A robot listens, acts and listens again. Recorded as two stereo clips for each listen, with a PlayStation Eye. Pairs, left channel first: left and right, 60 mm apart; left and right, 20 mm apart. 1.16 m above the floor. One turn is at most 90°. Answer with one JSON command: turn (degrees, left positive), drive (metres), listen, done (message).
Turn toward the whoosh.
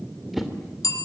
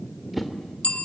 {"turn": -30}
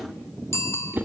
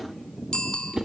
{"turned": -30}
{"turn": -90}
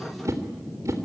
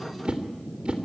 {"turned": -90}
{"turn": -60}
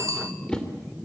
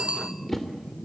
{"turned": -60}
{"turn": 15}
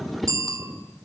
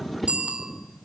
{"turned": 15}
{"done": "Facing the whoosh."}